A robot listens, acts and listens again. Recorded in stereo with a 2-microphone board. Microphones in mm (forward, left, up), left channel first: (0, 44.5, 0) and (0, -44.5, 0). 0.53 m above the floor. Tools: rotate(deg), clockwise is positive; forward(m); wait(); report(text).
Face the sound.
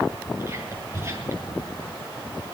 rotate(30)
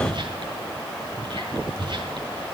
rotate(120)
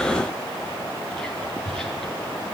report("Facing the whispering, over 4 m away.")